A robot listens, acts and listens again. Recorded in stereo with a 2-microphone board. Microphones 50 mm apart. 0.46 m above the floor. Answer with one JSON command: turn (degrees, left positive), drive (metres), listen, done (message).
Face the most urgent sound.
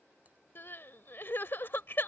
{"turn": 50}
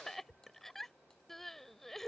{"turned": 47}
{"turn": 10}
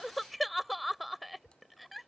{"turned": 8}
{"done": "Facing the crying."}